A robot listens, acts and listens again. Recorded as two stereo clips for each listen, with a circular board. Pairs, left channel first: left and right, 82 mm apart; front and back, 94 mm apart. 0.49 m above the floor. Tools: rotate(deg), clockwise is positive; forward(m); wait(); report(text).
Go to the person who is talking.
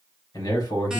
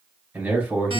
rotate(-110)
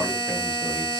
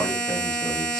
wait()
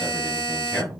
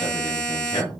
forward(1.0)
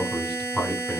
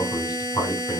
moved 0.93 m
forward(1.0)
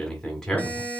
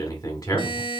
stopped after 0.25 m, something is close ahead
rotate(-15)
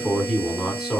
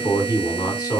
report("Arrived at the man speaking, straight ahead.")